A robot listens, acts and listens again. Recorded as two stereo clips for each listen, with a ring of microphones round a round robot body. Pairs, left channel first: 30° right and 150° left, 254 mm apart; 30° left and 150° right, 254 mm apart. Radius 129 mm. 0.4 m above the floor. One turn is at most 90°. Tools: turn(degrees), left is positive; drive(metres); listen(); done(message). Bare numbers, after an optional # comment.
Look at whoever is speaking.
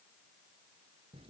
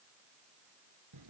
listen()
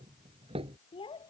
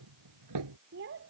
# The child speaking: 100° right.
turn(-90)
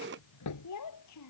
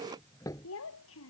# The child speaking is now 10° right.
turn(-10)
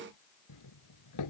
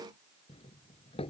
listen()
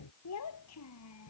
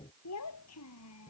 done("Facing the child speaking.")